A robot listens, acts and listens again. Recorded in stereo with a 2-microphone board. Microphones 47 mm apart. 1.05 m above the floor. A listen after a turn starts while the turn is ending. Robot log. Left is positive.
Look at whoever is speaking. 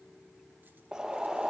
cmd idle
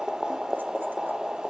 cmd idle
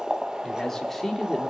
cmd yaw +30
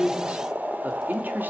note: So it is at 40° right.
cmd yaw -40
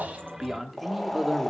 end: Found it: a man speaking, straight ahead.